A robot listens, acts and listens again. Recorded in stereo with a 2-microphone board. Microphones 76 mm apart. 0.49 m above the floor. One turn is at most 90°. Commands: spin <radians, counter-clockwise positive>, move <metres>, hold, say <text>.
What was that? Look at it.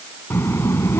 spin 0.61
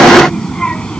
spin 0.26
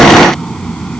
spin 0.17
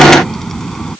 say Facing the child speaking.